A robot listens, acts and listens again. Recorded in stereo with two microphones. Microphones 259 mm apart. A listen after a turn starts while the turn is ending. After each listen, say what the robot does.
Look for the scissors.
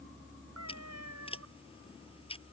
Turn 20° left.
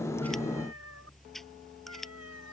Found it: scissors, straight ahead.